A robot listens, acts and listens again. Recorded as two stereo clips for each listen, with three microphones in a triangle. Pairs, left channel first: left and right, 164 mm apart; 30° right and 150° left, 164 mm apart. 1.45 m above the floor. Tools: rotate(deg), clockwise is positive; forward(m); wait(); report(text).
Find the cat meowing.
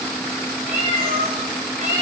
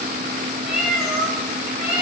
rotate(125)
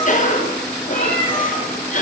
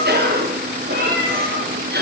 rotate(-10)
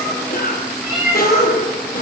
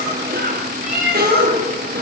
report("Found it: a cat meowing, straight ahead.")